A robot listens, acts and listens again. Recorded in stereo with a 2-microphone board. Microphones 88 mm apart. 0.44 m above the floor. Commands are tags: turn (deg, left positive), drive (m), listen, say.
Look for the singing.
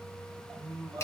<turn deg="-30"/>
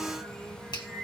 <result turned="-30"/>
<say>Facing the singing, over 4 m away.</say>